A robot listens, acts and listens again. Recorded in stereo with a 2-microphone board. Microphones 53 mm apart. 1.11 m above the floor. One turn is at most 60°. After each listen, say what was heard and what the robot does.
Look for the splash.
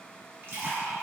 The splash: about 55° right or 125° right. Turn 55° right.
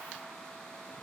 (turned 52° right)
Keep listening.
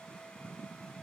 I heard a splash, but can't make it out now. It was about straight ahead or 75° right.